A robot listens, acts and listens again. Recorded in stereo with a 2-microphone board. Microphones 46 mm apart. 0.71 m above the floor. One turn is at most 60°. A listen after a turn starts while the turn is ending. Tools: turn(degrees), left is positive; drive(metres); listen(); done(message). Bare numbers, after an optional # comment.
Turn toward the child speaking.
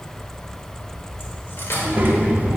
# The child speaking: about 40° right or 140° right.
turn(-40)
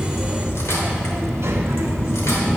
# So it is at 100° right.
turn(-60)
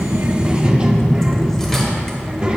# The child speaking is now 25° right.
turn(-25)
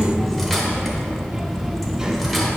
# The child speaking is now 15° right.
turn(-15)
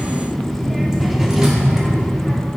done("Found it: a child speaking, straight ahead, 1 to 2 m away.")